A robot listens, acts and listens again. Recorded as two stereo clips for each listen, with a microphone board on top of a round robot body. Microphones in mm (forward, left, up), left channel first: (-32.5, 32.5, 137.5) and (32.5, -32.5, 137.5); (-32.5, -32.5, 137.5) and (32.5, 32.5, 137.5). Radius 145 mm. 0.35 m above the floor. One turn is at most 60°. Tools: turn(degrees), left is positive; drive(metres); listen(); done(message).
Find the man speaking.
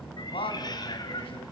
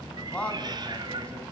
turn(degrees=60)
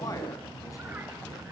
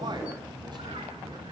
turn(degrees=60)
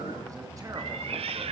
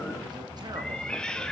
turn(degrees=30)
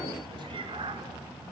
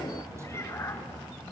done("Facing where the man speaking came from. I can't hear it now.")